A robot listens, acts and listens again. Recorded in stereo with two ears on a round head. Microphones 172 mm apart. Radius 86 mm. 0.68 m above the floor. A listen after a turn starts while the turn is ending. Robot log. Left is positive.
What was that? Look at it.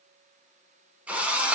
cmd yaw -30
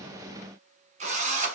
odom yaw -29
note: So it is at 145° right.
cmd yaw -145
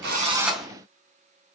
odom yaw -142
end: Found it: a drill, straight ahead, under 1 m away.